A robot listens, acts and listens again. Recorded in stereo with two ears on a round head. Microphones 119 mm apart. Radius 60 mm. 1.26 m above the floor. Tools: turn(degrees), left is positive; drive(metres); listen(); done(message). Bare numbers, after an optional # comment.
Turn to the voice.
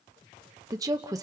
# The woman speaking: about 25° right or 155° right.
turn(-25)
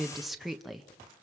done("Facing the woman speaking.")